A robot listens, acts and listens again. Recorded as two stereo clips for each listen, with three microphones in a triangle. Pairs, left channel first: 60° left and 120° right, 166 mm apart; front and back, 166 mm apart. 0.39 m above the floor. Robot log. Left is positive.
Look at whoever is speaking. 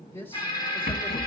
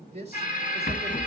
note: The man speaking: 135° left.
cmd yaw +135
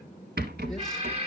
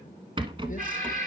cmd idle
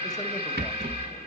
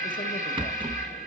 cmd idle
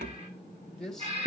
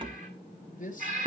note: The man speaking is now 25° right.
cmd yaw -25
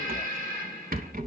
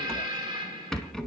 cmd idle
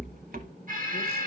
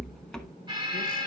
cmd idle
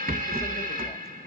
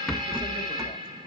end: I heard a man speaking from this way, but can't make it out now.